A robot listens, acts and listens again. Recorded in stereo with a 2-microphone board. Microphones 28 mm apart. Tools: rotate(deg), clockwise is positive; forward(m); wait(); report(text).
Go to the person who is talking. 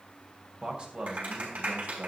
rotate(40)
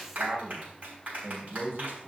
rotate(100)
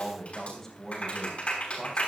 rotate(-10)
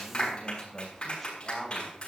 forward(1.0)
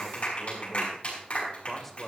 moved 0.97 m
forward(1.0)
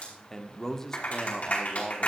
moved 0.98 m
rotate(-15)
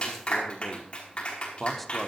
forward(1.0)
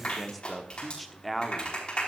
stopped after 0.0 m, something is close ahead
report("I am next to the man speaking.")